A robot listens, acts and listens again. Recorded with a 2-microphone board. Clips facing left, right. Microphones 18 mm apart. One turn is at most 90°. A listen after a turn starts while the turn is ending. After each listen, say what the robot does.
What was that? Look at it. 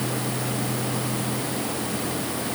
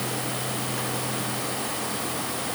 Keep listening.
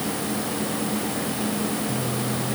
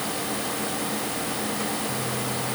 Keep listening.
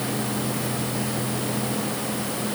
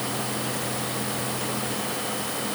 I can't make out anything.